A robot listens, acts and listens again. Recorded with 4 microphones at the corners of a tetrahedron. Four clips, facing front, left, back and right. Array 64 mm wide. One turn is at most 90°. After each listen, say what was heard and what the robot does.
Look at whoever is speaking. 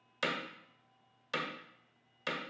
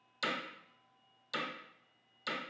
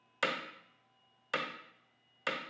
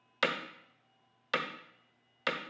Keep listening.
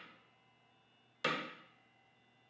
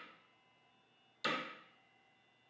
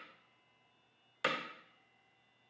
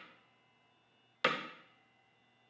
Keep listening.
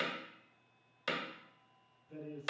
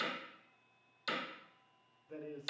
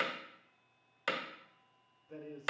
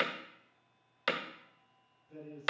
The man speaking: 130° left. Turn 90° left.
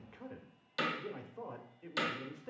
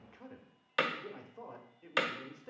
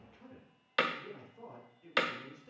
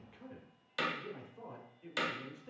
The man speaking is now 30° left. Turn 30° left.
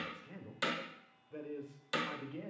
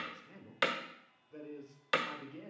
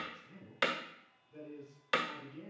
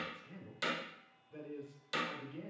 The man speaking is now 15° left. Turn 15° left.
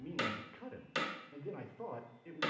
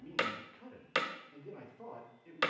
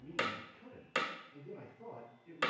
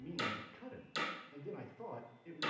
Facing the man speaking, 1 to 2 m away.